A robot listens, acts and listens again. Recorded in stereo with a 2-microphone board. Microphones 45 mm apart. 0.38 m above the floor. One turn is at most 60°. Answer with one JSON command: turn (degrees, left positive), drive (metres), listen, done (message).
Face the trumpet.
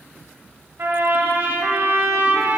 {"turn": -60}
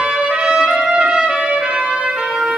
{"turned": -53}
{"turn": -30}
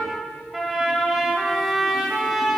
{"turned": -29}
{"done": "Found it: a trumpet, straight ahead, under 1 m away."}